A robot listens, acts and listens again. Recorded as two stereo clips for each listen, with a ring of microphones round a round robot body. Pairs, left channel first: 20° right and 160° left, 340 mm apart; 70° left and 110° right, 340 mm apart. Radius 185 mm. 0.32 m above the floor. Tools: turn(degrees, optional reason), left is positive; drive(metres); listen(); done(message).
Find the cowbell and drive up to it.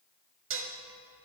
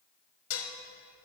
listen()
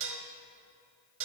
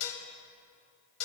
listen()
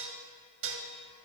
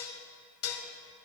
done("I can't make out a cowbell to turn to.")